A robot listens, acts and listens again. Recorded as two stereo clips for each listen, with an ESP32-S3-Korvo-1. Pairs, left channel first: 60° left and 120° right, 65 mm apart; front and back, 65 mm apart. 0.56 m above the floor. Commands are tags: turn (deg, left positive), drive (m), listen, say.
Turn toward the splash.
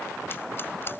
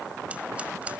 <listen/>
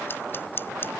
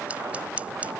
<listen/>
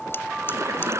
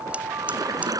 <turn deg="-160"/>
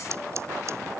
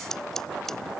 <say>Facing where the splash came from. I can't hear it now.</say>